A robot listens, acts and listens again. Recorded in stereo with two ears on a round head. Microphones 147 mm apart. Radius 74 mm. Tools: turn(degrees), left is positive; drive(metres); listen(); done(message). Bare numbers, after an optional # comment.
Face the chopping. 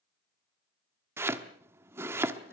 # The chopping: about 15° right or 165° right.
turn(-15)
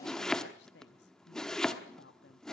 done("Facing the chopping, 1 to 2 m away.")